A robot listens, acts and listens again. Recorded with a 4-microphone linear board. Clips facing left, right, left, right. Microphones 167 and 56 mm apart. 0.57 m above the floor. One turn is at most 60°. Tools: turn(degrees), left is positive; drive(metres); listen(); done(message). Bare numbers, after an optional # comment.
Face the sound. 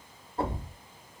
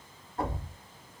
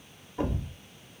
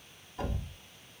# The thud: about 30° left or 150° left.
turn(30)
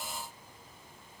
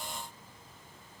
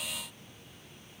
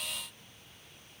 listen()
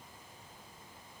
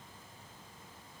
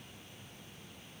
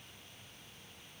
done("I heard a thud, but can't make it out now. It was about straight ahead or 120° left.")